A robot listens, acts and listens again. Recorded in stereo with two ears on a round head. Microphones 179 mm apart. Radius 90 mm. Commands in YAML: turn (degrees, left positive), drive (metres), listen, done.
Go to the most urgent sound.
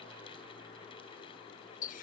listen: true
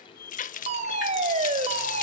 turn: -35
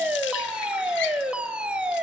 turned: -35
drive: 1.0
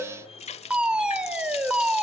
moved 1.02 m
drive: 1.0
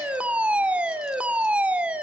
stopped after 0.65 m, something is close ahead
turn: -10
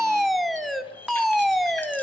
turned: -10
done: "Arrived at the fire alarm, straight ahead."